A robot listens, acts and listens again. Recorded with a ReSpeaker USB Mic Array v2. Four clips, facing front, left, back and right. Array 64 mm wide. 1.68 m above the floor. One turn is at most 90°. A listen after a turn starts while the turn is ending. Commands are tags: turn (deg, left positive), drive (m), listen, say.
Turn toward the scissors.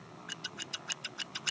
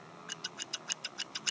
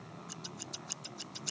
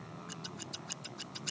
<turn deg="25"/>
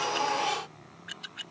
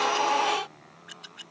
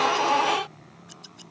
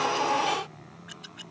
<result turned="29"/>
<say>Found it: scissors, straight ahead.</say>